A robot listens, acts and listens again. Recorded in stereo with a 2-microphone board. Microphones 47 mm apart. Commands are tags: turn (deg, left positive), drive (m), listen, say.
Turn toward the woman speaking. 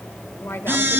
<turn deg="60"/>
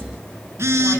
<listen/>
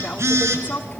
<turn deg="35"/>
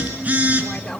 <turn deg="15"/>
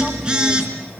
<listen/>
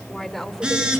<say>Found it: a woman speaking, straight ahead.</say>